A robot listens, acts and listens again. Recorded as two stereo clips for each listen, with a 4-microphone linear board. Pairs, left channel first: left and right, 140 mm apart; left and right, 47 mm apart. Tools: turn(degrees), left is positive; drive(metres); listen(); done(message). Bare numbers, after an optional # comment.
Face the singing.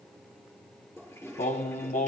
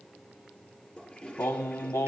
turn(90)
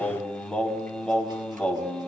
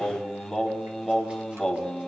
done("Facing the singing, 1 to 2 m away.")